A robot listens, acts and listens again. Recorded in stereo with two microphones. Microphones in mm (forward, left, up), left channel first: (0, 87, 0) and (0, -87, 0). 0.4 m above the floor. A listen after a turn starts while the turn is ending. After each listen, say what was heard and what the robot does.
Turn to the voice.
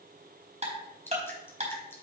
Keep listening.
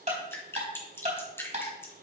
Keep listening.
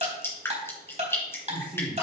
Turn 30° right.
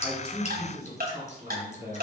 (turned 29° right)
So it is at 140° right. Turn 140° right.
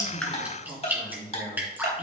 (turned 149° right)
The man speaking is now 10° left. Turn 10° left.
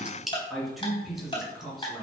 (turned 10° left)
Facing the man speaking.